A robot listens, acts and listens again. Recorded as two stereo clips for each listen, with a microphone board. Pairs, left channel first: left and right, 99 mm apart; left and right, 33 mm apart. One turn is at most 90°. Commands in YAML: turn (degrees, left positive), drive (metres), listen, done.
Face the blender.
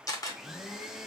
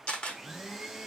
turn: -30
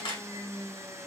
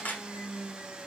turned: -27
turn: -90
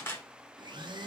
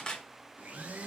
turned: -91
turn: -55
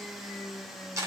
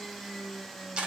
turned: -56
done: "Found it: a blender, straight ahead, under 1 m away."